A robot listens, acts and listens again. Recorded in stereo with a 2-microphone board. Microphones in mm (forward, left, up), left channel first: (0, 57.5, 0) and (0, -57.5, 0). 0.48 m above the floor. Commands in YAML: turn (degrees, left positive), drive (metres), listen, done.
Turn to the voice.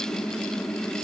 listen: true
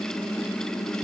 listen: true
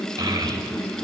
turn: -35
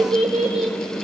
turn: -105
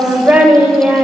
turn: -15
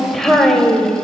done: "Found it: a child speaking, straight ahead."